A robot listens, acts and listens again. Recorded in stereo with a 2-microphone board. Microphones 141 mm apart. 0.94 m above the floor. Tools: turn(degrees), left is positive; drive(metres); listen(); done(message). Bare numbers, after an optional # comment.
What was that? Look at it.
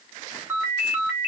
# The ringtone: about 20° right or 160° right.
turn(-20)
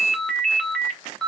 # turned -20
done("Facing the ringtone, 1 to 2 m away.")